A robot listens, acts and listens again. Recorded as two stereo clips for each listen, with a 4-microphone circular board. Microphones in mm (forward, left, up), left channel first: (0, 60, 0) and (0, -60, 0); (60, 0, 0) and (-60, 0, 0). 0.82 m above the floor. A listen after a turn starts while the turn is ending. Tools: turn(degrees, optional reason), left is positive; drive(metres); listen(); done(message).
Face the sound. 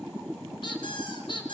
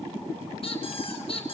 turn(degrees=40, reason="The squeak: 40° left.")
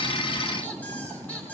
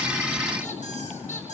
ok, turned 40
listen()
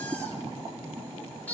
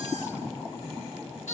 turn(degrees=15, reason="The squeak is now 15° left.")
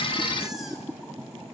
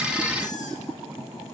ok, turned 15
listen()
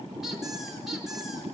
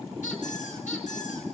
done("Facing the squeak.")